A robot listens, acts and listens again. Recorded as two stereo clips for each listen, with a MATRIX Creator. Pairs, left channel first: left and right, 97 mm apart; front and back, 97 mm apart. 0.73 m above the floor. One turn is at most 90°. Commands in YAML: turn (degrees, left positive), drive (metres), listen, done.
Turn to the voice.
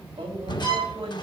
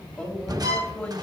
turn: -80
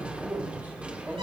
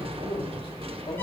turn: -20
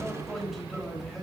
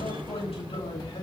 done: "Found it: a man speaking, straight ahead."